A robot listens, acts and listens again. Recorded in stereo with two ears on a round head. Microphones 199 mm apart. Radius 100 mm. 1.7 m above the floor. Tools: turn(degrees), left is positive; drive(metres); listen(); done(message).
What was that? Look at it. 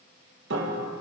turn(degrees=-55)
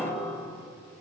done("Facing the piano, 2 to 4 m away.")